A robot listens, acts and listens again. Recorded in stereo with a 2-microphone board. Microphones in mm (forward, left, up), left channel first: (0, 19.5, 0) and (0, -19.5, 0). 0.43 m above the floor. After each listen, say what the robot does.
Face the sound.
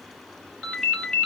Turn 25° left.
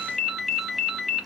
Facing the ringtone, under 1 m away.